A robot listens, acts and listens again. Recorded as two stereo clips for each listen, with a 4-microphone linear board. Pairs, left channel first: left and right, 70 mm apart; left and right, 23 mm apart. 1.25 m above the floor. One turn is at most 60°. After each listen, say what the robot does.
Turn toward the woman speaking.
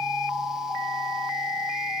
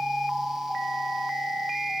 Keep listening.
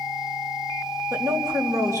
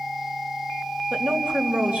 Turn 50° right.
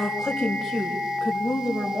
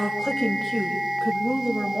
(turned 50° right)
Turn 10° right.
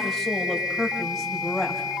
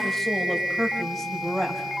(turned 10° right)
Facing the woman speaking.